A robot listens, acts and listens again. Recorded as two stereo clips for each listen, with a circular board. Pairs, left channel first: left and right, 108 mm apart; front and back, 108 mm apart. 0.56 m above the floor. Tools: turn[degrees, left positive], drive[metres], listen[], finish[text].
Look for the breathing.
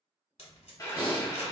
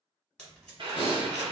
Thought: The breathing: 20° right.
Action: turn[-20]
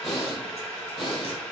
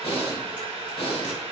Action: finish[Facing the breathing.]